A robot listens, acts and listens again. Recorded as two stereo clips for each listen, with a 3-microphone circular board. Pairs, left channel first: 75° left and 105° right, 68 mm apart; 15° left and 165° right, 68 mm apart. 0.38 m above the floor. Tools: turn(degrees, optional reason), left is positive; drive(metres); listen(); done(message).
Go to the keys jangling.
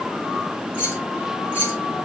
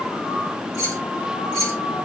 turn(degrees=15, reason="The keys jangling: 15° left.")
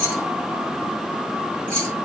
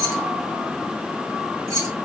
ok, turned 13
drive(metres=1.0)
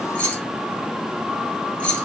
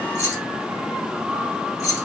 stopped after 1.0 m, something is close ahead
done("Arrived at the keys jangling, straight ahead.")